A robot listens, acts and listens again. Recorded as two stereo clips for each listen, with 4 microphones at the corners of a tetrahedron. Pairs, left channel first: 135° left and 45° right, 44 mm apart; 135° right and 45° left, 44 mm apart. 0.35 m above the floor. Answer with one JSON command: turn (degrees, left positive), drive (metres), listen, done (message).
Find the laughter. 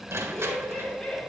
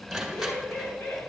{"turn": -155}
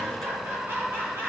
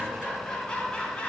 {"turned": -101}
{"turn": -65}
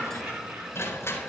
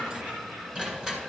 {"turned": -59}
{"done": "Facing the laughter."}